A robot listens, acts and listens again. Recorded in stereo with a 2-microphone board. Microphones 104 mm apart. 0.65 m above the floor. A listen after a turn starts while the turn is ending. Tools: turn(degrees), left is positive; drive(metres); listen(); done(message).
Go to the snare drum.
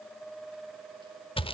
listen()
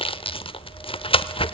listen()
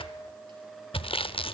done("I can't make out a snare drum to turn to.")